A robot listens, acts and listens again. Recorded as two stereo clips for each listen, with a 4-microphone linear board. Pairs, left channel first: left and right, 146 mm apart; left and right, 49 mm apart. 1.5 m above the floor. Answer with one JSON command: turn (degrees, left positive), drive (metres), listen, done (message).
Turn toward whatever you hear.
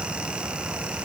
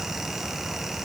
{"listen": true}
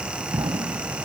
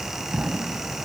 {"turn": -35}
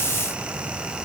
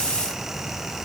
{"listen": true}
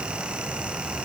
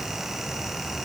{"done": "I heard an explosion, but can't make it out now. It was about straight ahead or 110° right."}